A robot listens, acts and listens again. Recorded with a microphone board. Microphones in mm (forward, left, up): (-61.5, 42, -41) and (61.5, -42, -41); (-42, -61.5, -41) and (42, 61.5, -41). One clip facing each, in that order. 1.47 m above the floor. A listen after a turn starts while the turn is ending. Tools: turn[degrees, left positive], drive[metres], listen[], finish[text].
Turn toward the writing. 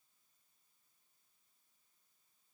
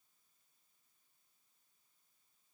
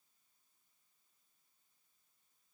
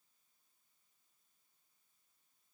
Action: listen[]
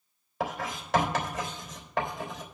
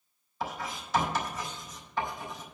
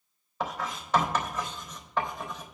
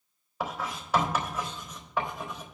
Thought: The writing: 135° left.
Action: turn[135]
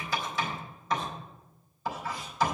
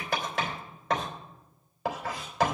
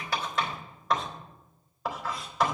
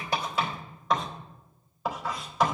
Thought: The writing is now 35° right.
Action: turn[-35]
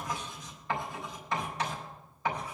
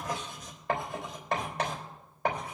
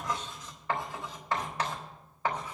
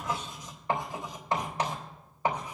Thought: The writing is now 15° right.
Action: turn[-15]
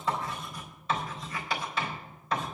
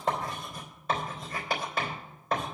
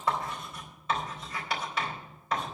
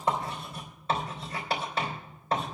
Action: finish[Facing the writing, 2 to 4 m away.]